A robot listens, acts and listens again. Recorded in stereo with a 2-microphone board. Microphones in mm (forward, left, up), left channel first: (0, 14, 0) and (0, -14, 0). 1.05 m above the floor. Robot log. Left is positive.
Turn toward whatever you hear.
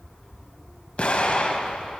note: The explosion: about 45° left or 135° left.
cmd yaw +45
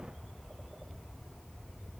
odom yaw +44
cmd idle
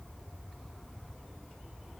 end: I heard an explosion, but can't make it out now. It was about straight ahead or 90° left.